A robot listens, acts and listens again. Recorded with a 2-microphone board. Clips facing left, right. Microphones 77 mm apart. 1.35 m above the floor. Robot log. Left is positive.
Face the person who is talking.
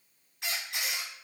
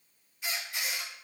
cmd idle
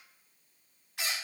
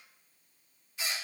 cmd idle
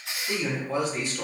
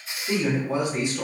note: The man speaking: about 15° right or 165° right.
cmd yaw -15
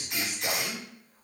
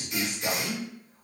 note: So it is at 150° right.
cmd yaw -150
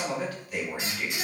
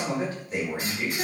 note: The man speaking is now 30° right.
cmd yaw -30
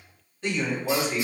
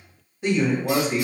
note: The man speaking is now 15° right.
cmd yaw -15
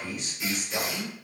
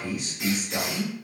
end: Facing the man speaking.